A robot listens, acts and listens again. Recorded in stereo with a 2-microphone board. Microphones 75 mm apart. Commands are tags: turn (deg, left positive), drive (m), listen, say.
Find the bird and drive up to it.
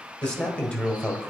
<listen/>
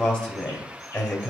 <listen/>
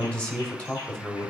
<say>I can't make out a bird to turn to.</say>